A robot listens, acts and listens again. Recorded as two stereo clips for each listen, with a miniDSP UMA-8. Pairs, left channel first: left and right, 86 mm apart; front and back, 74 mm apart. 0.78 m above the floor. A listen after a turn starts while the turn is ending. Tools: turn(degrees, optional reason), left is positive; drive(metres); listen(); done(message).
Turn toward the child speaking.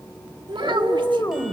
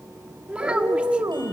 turn(degrees=-105, reason="The child speaking: 105° right.")
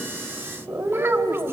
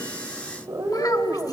listen()
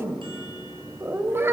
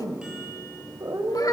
listen()
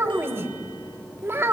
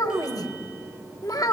turn(degrees=-30, reason="The child speaking is now 30° right.")
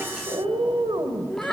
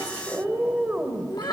done("Found it: a child speaking, straight ahead, 1 to 2 m away.")